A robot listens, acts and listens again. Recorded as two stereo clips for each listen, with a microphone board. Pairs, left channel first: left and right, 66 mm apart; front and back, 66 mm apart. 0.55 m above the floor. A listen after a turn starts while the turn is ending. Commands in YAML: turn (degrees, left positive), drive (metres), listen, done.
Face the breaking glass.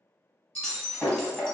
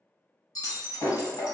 turn: 15
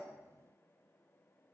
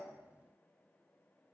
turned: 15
done: "I heard breaking glass from this way, but can't make it out now."